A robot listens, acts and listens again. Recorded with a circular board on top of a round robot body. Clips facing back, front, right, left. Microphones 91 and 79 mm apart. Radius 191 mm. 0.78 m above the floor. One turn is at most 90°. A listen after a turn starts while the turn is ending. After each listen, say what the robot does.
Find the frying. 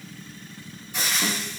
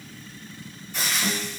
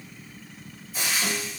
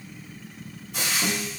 Turn 90° left.
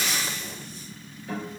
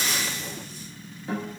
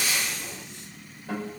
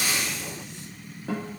Turn 15° left.
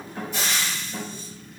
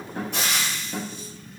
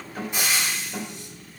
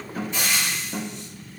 Turn 15° right.
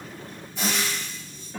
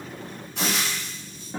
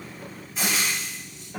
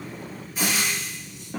Facing the frying, 1 to 2 m away.